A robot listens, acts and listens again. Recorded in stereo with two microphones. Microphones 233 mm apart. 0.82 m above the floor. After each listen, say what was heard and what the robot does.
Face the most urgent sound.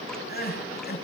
The crying: about 45° left or 135° left. Turn 45° left.
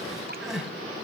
Facing the crying.